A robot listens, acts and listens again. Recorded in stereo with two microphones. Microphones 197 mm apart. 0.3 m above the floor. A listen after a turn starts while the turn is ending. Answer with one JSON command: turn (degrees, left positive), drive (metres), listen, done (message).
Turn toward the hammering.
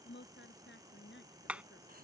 {"turn": -30}
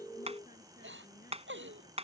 {"turn": -145}
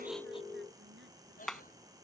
{"done": "Facing the hammering."}